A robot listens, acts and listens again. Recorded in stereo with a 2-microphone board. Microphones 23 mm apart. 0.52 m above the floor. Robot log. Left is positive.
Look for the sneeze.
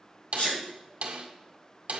note: The sneeze: about 55° left or 125° left.
cmd yaw +55
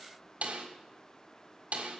cmd idle
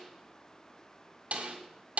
end: I heard a sneeze, but can't make it out now. It was about straight ahead or 70° left.